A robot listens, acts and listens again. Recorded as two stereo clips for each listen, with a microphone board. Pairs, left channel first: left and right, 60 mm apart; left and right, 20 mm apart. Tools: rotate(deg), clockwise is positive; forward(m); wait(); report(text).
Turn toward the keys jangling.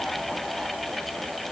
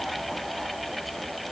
wait()
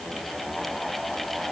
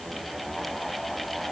wait()
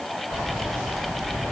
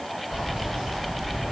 rotate(60)
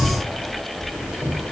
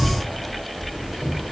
rotate(10)
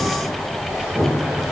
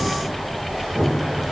report("Facing the keys jangling.")